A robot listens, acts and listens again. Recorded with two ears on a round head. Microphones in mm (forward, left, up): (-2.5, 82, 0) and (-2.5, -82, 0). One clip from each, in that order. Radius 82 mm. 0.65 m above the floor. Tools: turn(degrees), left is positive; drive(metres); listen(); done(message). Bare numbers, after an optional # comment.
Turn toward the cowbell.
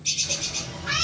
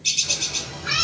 listen()
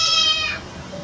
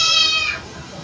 listen()
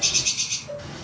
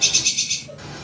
# The cowbell: about 50° left or 130° left.
turn(50)
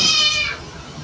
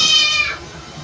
listen()
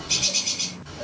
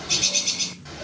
listen()
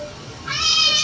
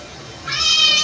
done("I heard a cowbell, but can't make it out now. It was about straight ahead or 80° left.")